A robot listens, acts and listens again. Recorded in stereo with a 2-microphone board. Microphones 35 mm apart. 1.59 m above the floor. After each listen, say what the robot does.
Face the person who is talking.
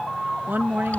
Turn 70° right.
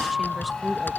Keep listening.
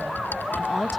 Facing the woman speaking.